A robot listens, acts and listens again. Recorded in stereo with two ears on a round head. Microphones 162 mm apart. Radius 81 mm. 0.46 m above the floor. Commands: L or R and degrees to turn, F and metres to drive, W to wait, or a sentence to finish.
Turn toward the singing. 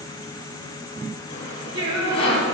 R70
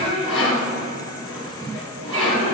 R35
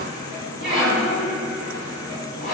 Facing the singing, over 4 m away.